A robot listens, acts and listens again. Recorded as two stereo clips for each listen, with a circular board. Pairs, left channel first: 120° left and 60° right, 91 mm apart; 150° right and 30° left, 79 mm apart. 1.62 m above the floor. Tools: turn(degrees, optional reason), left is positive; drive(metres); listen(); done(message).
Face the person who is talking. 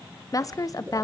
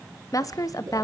turn(degrees=170, reason="The woman speaking: 170° left.")
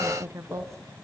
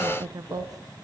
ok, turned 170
done("Facing the woman speaking, 1 to 2 m away.")